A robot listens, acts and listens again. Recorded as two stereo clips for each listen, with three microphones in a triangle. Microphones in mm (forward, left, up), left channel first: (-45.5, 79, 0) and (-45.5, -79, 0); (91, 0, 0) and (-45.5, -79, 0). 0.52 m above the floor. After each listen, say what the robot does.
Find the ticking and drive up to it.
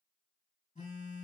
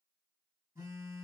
Keep listening.
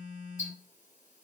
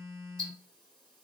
Turn 115° left.
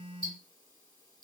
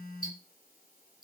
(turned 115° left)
Turn 30° left.
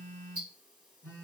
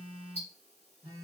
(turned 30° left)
Turn 10° right.
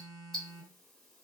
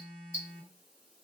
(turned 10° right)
Drive 1.0 m forward.
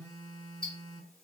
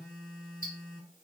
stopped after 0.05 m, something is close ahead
Blocked. The ticking is further on, straight ahead.